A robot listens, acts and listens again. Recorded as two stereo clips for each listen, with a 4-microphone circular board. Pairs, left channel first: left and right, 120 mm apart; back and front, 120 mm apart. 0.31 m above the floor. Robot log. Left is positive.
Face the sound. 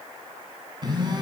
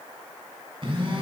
note: The phone buzzing: 40° right.
cmd yaw -40
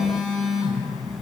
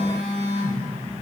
end: Found it: a phone buzzing, straight ahead, 1 to 2 m away.